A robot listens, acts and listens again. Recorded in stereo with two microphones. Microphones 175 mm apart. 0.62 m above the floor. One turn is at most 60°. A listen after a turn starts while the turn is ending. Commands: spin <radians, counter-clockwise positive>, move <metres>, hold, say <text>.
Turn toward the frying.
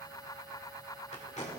hold
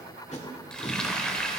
spin 0.52
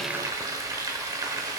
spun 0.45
spin -0.35
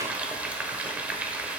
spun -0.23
spin -0.17
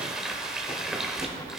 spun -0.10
say Facing the frying, 1 to 2 m away.